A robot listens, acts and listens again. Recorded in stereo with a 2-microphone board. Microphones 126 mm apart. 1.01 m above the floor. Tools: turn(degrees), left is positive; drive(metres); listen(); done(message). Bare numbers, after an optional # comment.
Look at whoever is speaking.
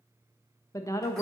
# The woman speaking: about 25° left or 155° left.
turn(25)
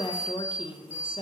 # So it is at 130° left.
turn(130)
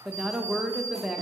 done("Facing the woman speaking, under 1 m away.")